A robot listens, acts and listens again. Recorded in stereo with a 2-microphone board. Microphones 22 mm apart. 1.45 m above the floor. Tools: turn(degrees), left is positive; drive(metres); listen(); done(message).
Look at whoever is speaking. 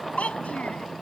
turn(degrees=90)
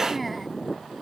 listen()
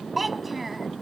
turn(degrees=-10)
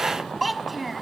done("Facing the child speaking.")